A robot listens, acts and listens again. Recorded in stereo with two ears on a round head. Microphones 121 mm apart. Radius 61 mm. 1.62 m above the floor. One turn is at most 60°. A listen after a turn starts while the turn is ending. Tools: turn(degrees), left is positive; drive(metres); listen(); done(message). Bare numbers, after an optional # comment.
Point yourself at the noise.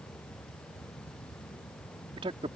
# The man speaking: about 40° right or 140° right.
turn(-40)
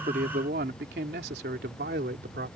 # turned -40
# So it is at 95° right.
turn(-60)
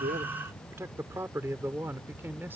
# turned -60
# The man speaking is now 15° right.
turn(-15)
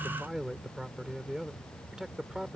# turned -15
done("Found it: a man speaking, straight ahead.")